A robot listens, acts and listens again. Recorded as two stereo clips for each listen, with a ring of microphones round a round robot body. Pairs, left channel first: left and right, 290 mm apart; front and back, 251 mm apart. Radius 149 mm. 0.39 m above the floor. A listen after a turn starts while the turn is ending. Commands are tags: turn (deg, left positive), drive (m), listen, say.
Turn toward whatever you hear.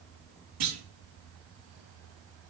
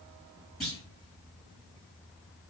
<turn deg="-90"/>
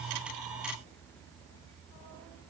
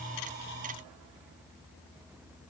<say>I heard a clunk from this way, but can't make it out now.</say>